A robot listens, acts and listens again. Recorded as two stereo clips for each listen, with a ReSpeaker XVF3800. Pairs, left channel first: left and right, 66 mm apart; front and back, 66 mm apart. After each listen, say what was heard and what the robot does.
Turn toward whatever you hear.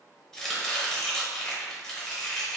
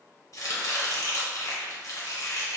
The chopping: 10° left. Turn 10° left.
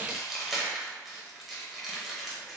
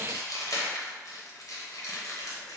Found it: chopping, straight ahead.